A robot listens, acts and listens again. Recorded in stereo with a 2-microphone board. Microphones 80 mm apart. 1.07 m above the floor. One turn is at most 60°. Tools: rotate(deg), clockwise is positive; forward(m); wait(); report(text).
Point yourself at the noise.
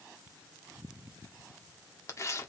rotate(-40)
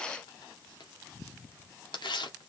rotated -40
rotate(-60)
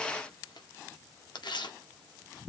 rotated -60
rotate(-60)
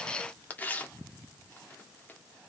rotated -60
rotate(-25)
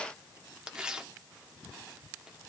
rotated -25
rotate(10)
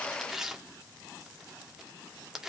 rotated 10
report("Facing the tearing paper.")